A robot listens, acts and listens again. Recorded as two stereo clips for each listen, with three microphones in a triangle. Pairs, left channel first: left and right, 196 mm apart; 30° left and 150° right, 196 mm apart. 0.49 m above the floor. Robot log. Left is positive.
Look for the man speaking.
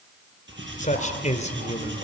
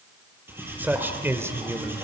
note: The man speaking: 140° left.
cmd yaw +140
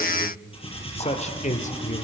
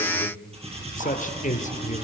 note: The man speaking is now 65° left.
cmd yaw +65
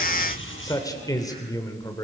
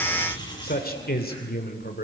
note: The man speaking is now 25° left.
cmd yaw +25
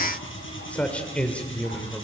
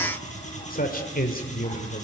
note: The man speaking is now 10° left.
cmd yaw +10
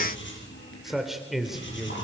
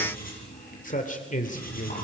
end: Found it: a man speaking, straight ahead.